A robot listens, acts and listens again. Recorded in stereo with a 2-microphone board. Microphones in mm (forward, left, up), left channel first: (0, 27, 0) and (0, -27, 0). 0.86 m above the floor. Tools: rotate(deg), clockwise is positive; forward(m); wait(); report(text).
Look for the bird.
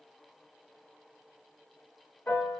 wait()
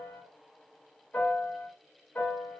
wait()
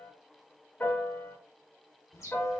rotate(-90)
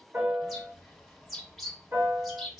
report("Found it: a bird, straight ahead.")